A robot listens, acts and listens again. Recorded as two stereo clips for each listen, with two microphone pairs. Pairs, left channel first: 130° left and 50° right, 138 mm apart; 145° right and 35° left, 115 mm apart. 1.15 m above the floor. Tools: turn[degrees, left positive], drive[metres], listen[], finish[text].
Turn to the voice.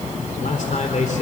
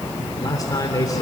Thought: The man speaking: 160° left.
Action: turn[160]
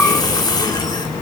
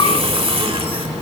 Action: listen[]
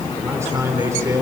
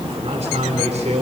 Thought: The man speaking is now 20° left.
Action: turn[20]
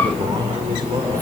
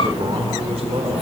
Action: finish[Facing the man speaking.]